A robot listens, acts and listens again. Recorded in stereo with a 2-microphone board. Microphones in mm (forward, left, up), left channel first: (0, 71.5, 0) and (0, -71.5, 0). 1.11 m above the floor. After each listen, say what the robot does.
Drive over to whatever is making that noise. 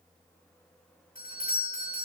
Turn 70° left.
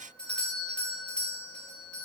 Drive 1.0 m forward.
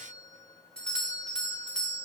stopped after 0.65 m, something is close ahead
Something is in my way. I am facing the doorbell but have not reached it.